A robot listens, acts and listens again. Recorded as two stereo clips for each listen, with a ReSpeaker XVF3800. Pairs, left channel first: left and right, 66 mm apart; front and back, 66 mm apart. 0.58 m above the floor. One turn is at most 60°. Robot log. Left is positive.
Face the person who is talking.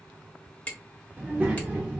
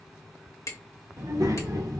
note: The child speaking: 155° right.
cmd yaw -60
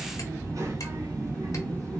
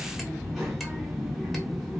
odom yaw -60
note: The child speaking is now 100° right.
cmd yaw -60
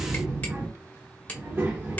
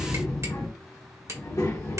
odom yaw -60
note: The child speaking is now 35° right.
cmd yaw -35
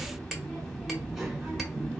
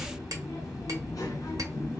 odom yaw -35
end: Found it: a child speaking, straight ahead, under 1 m away.